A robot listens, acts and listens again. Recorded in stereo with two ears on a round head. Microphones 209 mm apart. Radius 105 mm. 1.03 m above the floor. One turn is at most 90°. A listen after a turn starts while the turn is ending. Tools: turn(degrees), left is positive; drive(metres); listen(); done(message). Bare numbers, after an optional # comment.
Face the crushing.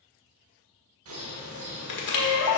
# The crushing: about 50° left or 130° left.
turn(50)
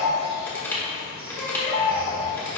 # So it is at 10° left.
turn(10)
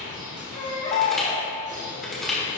done("Found it: crushing, straight ahead, 1 to 2 m away.")